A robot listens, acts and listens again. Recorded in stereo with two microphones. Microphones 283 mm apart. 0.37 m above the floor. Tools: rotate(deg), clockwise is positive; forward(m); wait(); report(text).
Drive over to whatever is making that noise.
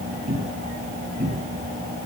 rotate(25)
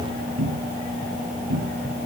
rotate(130)
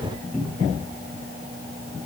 forward(1.0)
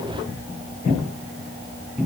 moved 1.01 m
forward(1.0)
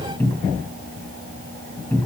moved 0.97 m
rotate(-10)
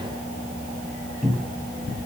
forward(1.0)
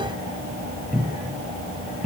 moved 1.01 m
forward(1.0)
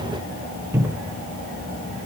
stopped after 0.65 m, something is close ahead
rotate(15)
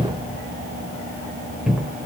report("Arrived at the cupboard door, straight ahead.")